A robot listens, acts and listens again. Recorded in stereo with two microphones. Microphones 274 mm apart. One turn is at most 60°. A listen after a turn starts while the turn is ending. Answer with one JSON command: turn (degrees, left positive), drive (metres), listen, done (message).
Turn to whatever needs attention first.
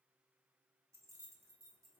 {"listen": true}
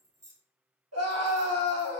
{"turn": -60}
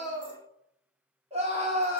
{"turn": -25}
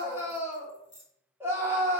{"turn": -10}
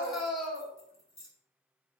{"done": "Facing the scream."}